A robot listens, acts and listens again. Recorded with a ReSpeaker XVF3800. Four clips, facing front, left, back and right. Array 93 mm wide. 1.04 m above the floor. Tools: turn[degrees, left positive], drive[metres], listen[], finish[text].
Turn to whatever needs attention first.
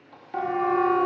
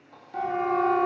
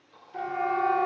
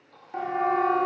Thought: The siren: 20° right.
Action: turn[-20]
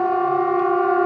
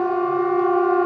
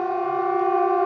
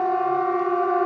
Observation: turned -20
Action: finish[Facing the siren, 2 to 4 m away.]